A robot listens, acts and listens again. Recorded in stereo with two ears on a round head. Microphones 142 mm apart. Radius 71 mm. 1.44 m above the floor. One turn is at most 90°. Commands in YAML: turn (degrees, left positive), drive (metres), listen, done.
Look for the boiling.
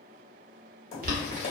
turn: -60
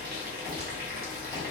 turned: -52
turn: -70
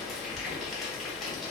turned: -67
done: "Found it: boiling, straight ahead."